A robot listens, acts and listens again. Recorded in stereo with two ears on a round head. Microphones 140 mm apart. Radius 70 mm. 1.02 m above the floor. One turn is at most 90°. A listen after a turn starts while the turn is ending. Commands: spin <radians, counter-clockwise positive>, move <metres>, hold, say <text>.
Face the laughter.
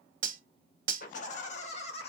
spin 0.70
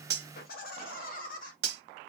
spin 1.57
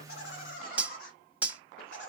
spin 1.13
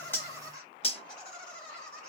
spin 0.44
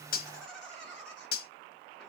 say Facing the laughter.